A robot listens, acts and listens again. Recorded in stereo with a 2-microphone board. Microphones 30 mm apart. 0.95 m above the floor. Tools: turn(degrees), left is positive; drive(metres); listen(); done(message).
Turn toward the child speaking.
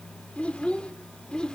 turn(degrees=30)
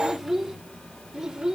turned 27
turn(degrees=-25)
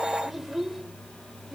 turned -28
turn(degrees=-15)
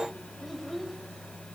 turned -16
done("Found it: a child speaking, straight ahead, 2 to 4 m away.")